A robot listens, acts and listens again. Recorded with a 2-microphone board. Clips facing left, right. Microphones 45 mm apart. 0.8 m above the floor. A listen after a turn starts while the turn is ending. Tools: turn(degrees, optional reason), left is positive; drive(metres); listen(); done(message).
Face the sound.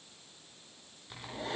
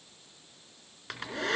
turn(degrees=-90)
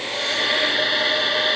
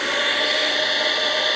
done("Facing the hair dryer, 2 to 4 m away.")